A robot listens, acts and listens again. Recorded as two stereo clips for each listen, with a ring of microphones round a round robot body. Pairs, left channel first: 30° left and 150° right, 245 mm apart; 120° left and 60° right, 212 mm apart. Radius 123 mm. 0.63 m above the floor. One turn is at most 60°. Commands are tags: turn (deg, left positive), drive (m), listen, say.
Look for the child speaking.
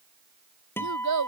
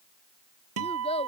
<turn deg="-60"/>
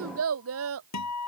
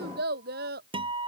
<turn deg="-60"/>
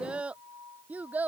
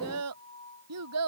<turn deg="-60"/>
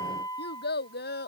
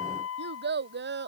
<turn deg="-25"/>
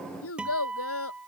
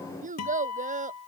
<say>Facing the child speaking.</say>